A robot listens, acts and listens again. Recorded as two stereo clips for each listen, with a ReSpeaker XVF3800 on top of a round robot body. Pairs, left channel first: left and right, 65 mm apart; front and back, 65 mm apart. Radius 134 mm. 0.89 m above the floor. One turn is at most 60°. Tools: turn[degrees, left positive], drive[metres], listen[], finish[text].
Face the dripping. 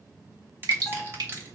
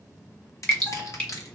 Thought: The dripping: 75° right.
Action: turn[-60]
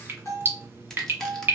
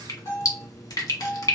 Thought: The dripping is now 30° right.
Action: turn[-30]
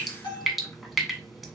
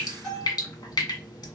Action: finish[Facing the dripping, 1 to 2 m away.]